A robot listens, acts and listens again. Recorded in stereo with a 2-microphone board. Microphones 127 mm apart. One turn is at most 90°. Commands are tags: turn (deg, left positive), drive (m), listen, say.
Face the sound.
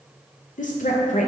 <turn deg="90"/>
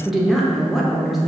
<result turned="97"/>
<say>Found it: a woman speaking, straight ahead.</say>